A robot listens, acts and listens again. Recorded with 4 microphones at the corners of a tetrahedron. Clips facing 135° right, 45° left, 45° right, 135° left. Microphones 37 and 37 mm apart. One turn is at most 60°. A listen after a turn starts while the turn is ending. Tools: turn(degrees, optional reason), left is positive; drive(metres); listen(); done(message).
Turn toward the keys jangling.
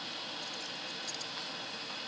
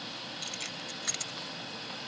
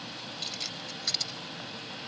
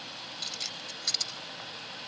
turn(degrees=40, reason="The keys jangling: 40° left.")
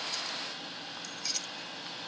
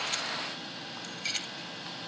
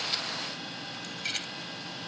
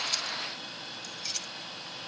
done("Found it: keys jangling, straight ahead.")